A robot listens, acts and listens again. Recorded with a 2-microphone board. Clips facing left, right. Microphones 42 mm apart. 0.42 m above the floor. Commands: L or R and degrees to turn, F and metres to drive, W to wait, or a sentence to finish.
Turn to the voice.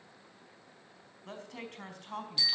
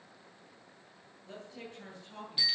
L70
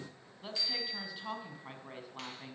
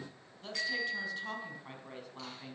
L15
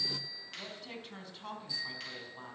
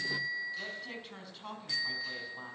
Facing the woman speaking, over 4 m away.